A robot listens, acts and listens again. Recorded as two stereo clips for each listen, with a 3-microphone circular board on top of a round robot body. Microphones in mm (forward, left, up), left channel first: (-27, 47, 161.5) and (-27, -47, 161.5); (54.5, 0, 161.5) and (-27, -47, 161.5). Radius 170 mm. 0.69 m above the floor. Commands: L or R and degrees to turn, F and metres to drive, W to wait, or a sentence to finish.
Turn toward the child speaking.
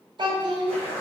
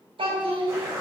R125
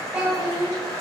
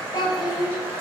R10
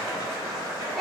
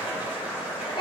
Facing the child speaking.